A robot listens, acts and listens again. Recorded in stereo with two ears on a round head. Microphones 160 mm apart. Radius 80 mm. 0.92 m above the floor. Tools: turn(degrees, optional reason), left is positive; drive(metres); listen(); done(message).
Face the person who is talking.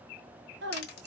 turn(degrees=-65, reason="The woman speaking: about 65° right or 115° right.")
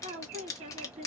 turn(degrees=-40, reason="So it is at 40° right.")
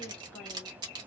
listen()
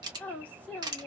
turn(degrees=10, reason="The woman speaking is now 10° left.")
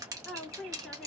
done("Found it: a woman speaking, straight ahead, 1 to 2 m away.")